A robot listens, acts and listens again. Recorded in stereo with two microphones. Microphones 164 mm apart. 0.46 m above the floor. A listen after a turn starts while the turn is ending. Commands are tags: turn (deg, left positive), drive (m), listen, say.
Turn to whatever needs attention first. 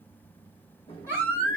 <turn deg="-15"/>
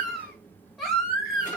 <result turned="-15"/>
<say>Facing the baby crying.</say>